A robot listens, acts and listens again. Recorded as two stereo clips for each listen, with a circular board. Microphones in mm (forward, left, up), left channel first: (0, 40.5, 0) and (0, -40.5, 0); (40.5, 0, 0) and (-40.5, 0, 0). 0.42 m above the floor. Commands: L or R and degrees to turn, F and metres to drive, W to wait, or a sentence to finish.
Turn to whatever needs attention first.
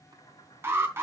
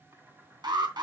R150
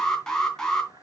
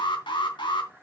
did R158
Found it: an alarm, straight ahead.